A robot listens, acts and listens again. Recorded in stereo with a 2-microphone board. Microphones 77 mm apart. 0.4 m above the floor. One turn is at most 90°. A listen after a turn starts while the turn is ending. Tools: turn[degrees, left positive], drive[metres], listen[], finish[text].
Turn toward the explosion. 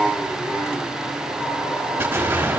Thought: The explosion: about 30° right or 150° right.
Action: turn[-30]
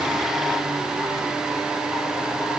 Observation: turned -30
Action: listen[]
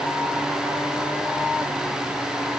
Action: finish[I heard an explosion, but can't make it out now. It was about straight ahead or 120° right.]